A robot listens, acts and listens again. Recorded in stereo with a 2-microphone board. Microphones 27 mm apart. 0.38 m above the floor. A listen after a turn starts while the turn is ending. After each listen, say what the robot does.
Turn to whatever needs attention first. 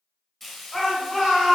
Turn 30° left.
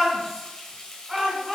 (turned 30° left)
Facing the shout.